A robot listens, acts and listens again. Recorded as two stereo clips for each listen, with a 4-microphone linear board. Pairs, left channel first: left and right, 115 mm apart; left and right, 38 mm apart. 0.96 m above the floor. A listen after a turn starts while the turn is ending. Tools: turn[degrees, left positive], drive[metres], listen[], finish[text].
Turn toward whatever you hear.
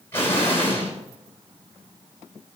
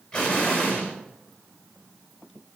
Thought: The explosion: about 20° left or 160° left.
Action: turn[20]
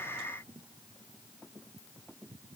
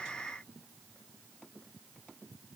Action: listen[]
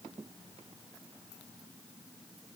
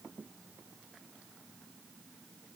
Action: finish[I heard an explosion, but can't make it out now. It was about straight ahead or 140° left.]